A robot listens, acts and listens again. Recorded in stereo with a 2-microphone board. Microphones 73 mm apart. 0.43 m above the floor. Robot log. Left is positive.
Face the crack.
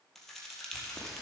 cmd yaw +30
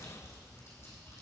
cmd idle
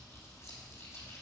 end: I heard a crack, but can't make it out now. It was about 30° right or 150° left.